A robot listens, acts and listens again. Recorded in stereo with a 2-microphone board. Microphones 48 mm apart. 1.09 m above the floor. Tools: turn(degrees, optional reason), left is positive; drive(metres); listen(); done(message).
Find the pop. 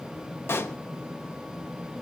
turn(degrees=55, reason="The pop: about 55° left or 125° left.")
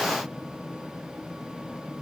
listen()
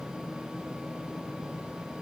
done("I heard a pop, but can't make it out now. It was about straight ahead or 70° left.")